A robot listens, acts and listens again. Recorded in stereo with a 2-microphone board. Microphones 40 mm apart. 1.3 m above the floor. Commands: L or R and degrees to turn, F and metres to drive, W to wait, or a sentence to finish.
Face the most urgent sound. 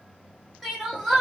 R30
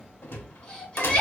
L25
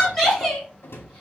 Facing the crying.